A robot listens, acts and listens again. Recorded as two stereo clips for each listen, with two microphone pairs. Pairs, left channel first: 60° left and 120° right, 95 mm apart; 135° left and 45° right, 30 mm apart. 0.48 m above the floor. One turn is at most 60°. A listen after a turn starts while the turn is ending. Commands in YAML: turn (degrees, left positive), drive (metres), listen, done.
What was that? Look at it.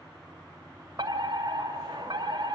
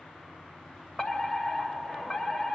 turn: -60
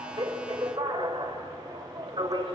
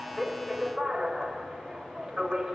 turn: -60
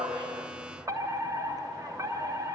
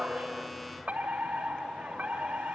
turn: -60
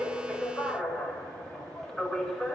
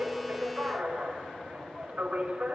turn: -30
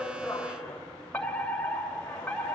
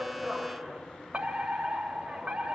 turn: -10
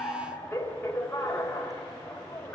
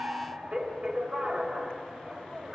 done: "Facing the fire alarm."